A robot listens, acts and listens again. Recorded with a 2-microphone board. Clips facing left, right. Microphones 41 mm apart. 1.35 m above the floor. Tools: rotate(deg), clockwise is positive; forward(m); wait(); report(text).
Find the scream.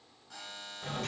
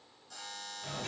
wait()
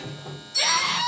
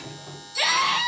rotate(20)
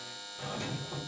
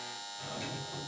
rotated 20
wait()
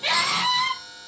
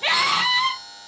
rotate(145)
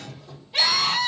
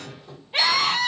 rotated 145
rotate(35)
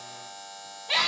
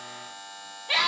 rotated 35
rotate(15)
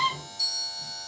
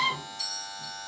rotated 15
report("Found it: a scream, straight ahead.")